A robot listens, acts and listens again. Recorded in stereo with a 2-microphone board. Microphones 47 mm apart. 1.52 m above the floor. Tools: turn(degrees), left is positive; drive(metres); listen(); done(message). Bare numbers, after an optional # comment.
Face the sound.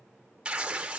# The tearing paper: about 20° right or 160° right.
turn(-20)
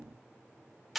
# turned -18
done("Facing the tearing paper.")